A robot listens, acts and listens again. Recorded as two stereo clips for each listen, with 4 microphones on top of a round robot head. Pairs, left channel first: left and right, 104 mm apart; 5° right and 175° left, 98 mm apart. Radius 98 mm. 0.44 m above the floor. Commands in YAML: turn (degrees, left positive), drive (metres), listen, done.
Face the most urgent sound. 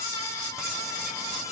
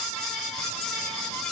listen: true
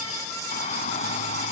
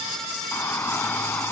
turn: 65
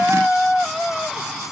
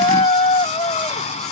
done: "Facing the shout."